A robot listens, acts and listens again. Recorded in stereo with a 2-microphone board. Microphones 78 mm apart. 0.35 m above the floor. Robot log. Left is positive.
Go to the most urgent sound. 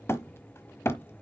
cmd idle
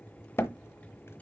cmd idle
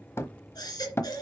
note: The baby crying: about 60° left or 120° left.
cmd yaw +60
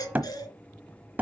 note: So it is at 55° left.
cmd yaw +55
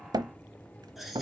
cmd fwd 1.0
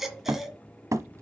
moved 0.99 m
cmd fwd 1.0
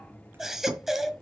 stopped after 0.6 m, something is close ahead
end: I am next to the baby crying.